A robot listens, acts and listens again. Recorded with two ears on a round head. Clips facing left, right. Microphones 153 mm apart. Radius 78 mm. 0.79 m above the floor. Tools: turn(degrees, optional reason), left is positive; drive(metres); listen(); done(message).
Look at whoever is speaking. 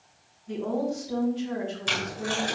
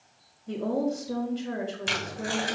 turn(degrees=-75, reason="The woman speaking: about 75° right or 105° right.")
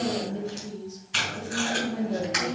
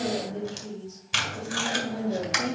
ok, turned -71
turn(degrees=-30, reason="So it is at 30° right.")
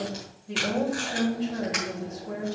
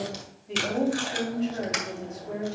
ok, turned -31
done("Found it: a woman speaking, straight ahead, over 4 m away.")